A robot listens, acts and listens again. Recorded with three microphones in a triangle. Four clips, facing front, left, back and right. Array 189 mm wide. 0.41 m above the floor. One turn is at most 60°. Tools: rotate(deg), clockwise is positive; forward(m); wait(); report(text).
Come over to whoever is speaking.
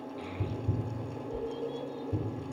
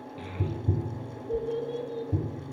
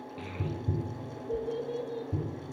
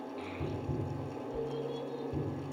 rotate(-60)
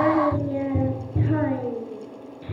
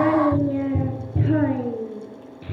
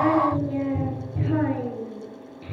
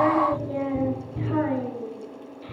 rotate(-60)
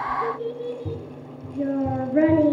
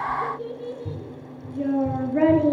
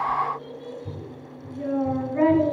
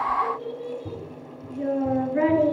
rotate(-35)
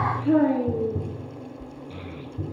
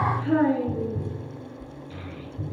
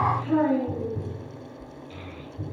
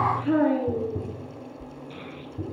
forward(1.0)
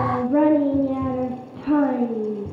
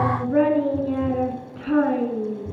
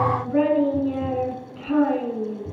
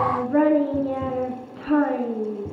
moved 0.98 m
forward(1.0)
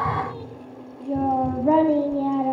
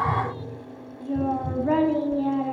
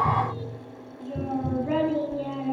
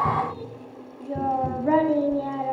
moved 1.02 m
forward(1.0)
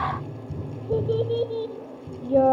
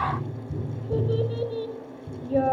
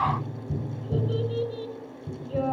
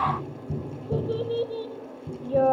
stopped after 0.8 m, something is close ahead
report("I am next to the child speaking.")